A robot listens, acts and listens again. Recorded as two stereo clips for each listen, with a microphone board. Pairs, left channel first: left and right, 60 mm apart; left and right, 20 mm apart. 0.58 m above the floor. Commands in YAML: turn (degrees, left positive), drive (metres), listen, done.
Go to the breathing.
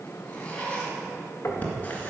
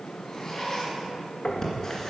turn: 25
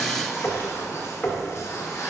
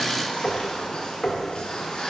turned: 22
listen: true
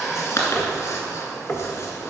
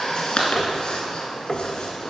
turn: 130
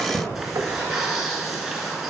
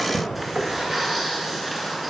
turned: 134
drive: 1.0
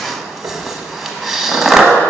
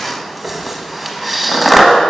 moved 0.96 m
drive: 1.0
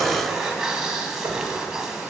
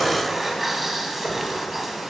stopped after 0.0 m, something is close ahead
listen: true
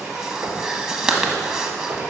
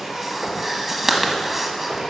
turn: -10
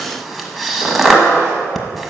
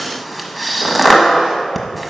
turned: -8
done: "I am next to the breathing."